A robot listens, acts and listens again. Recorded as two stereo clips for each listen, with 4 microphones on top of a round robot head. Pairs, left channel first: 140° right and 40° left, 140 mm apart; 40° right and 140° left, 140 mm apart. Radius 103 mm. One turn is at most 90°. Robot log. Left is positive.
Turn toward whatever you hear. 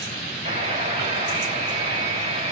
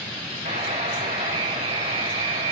note: The buzzer: 90° left.
cmd yaw +90
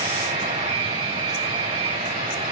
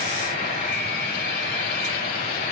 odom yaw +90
note: The buzzer is now 10° right.
cmd yaw -10
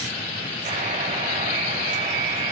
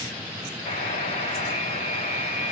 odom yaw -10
end: Facing the buzzer, over 4 m away.